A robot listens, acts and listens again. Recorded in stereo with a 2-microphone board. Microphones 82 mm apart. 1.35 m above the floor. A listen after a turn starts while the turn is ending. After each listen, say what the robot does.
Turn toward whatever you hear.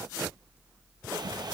Turn 55° right.
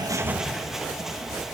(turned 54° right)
Facing the bird.